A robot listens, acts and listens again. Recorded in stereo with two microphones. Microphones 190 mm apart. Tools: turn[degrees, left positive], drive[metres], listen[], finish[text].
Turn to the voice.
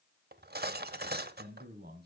Thought: The man speaking: about 55° right or 125° right.
Action: turn[-55]
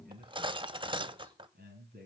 Thought: So it is at 50° right.
Action: turn[-50]
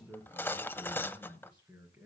Thought: The man speaking is now 10° right.
Action: turn[-10]
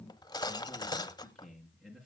Action: finish[Found it: a man speaking, straight ahead.]